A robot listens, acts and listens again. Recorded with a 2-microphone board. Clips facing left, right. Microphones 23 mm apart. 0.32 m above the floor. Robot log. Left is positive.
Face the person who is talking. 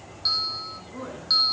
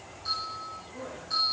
note: The woman speaking: about 40° left or 140° left.
cmd yaw +40
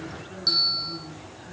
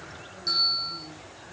note: So it is at 100° left.
cmd yaw +100
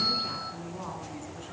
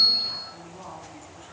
note: The woman speaking is now 15° left.
cmd yaw +15
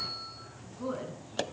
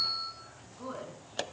end: Found it: a woman speaking, straight ahead, 2 to 4 m away.